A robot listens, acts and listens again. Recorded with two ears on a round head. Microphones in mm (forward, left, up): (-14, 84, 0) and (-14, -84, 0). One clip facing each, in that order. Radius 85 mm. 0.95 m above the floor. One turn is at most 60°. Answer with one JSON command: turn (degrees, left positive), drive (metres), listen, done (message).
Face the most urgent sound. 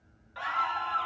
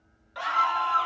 {"turn": -50}
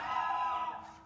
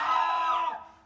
{"turn": -60}
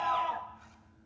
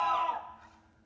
{"turn": 10}
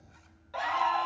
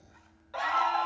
{"done": "Facing the scream, under 1 m away."}